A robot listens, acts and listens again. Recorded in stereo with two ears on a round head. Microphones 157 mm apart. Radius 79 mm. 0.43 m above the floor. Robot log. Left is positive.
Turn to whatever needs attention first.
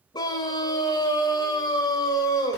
note: The scream: about 25° left or 155° left.
cmd yaw +25
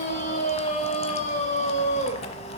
note: So it is at 125° left.
cmd yaw +125
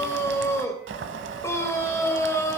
note: The scream is now 20° left.
cmd yaw +20
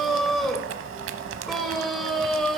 end: Found it: a scream, straight ahead.